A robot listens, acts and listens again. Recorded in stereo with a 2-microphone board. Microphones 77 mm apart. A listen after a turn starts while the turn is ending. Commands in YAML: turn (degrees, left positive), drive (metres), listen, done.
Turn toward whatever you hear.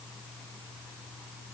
listen: true
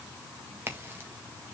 turn: -30
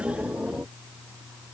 listen: true
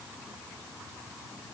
done: "I heard a crack, but can't make it out now. It was about straight ahead or 120° right."